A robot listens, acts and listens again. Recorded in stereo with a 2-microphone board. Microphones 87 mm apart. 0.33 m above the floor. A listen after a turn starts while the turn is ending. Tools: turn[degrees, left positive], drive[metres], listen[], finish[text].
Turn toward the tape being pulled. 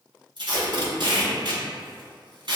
Thought: The tape being pulled: about 70° right or 110° right.
Action: turn[-70]
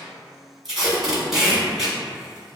Action: finish[Facing the tape being pulled, 1 to 2 m away.]